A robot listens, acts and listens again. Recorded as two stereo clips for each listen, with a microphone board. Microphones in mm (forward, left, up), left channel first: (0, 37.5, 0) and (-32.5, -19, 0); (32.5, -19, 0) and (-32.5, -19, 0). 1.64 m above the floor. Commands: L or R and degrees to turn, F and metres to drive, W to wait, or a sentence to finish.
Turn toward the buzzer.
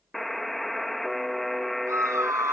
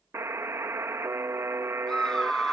L145
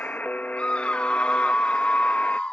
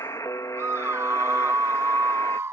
Facing the buzzer.